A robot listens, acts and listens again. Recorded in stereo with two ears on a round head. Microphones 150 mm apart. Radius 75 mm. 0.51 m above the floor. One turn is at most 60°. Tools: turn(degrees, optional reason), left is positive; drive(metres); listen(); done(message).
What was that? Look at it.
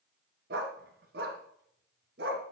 turn(degrees=-60, reason="The dog barking: about 65° right or 115° right.")
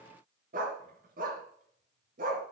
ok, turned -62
turn(degrees=-55, reason="So it is at 55° right.")
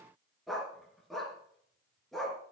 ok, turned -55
done("Found it: a dog barking, straight ahead, 2 to 4 m away.")